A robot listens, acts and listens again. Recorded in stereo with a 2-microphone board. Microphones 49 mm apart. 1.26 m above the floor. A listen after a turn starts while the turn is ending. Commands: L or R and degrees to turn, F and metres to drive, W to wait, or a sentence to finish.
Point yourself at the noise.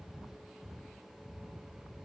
W
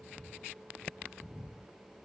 W
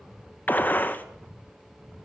L40
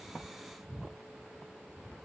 W
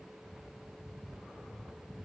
I heard a gunshot, but can't make it out now. It was about straight ahead or 100° left.